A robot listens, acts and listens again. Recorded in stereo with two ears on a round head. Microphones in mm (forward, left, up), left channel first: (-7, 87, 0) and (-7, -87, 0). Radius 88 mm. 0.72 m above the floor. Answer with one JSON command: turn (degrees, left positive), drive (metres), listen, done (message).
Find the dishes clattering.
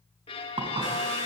{"turn": -25}
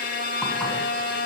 {"listen": true}
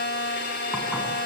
{"listen": true}
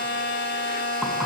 {"done": "I heard dishes clattering, but can't make it out now. It was about straight ahead or 130° right."}